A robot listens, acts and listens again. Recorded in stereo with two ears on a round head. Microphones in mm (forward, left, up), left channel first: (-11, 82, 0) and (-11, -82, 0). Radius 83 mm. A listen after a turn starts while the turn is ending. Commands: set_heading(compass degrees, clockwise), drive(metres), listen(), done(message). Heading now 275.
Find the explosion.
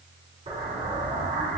set_heading(305)
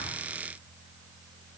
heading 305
listen()
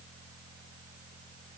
done("I heard an explosion, but can't make it out now. It was about straight ahead or 120° right.")